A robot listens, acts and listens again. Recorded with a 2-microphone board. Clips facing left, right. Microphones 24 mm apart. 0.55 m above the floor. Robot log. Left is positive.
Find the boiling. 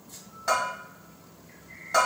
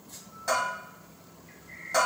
cmd idle
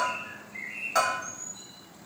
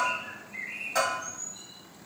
cmd idle
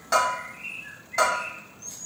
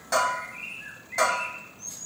end: I can't make out boiling to turn to.